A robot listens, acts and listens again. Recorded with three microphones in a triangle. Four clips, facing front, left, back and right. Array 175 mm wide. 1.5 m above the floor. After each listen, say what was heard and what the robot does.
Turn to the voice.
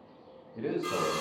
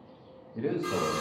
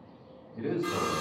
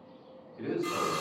The man speaking: 55° left. Turn 55° left.
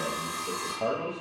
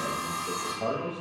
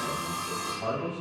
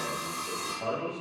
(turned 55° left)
The man speaking is now 15° left. Turn 15° left.
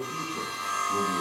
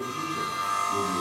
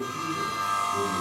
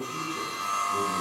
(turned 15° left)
Keep listening.
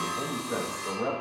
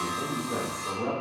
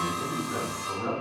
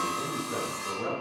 Facing the man speaking.